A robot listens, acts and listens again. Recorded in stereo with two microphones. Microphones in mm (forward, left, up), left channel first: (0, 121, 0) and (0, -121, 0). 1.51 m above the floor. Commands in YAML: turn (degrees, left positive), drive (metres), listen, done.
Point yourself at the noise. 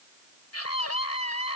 turn: 90
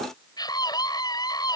turn: 15
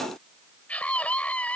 done: "Found it: a scream, straight ahead."